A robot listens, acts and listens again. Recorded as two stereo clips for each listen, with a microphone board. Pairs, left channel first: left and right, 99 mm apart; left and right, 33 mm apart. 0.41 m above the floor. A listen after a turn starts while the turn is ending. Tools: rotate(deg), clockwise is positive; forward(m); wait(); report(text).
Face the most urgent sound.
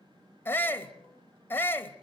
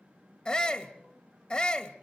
rotate(-20)
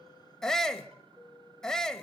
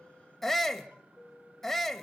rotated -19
report("Facing the shout, 1 to 2 m away.")